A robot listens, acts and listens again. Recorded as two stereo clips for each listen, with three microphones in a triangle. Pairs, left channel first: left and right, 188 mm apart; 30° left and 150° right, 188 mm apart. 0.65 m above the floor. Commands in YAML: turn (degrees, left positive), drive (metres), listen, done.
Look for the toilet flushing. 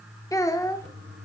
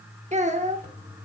turn: -105
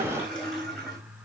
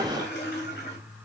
done: "Found it: a toilet flushing, straight ahead."